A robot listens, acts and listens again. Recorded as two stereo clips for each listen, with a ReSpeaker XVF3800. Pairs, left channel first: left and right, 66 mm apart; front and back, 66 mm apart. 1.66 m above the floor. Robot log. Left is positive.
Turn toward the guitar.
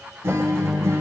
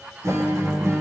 note: The guitar: 135° right.
cmd yaw -135
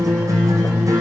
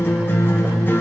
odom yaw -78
note: The guitar is now 60° right.
cmd yaw -60
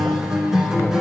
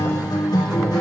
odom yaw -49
note: The guitar is now 10° right.
cmd yaw -10
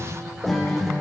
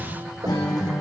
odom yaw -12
end: Found it: a guitar, straight ahead.